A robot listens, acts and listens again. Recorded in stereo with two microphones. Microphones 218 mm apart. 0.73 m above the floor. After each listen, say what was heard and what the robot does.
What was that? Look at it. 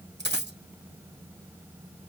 The dropped coin: about 55° right or 125° right. Turn 55° right.
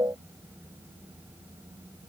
Keep listening.
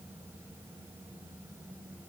I heard a dropped coin, but can't make it out now. It was about straight ahead or 70° right.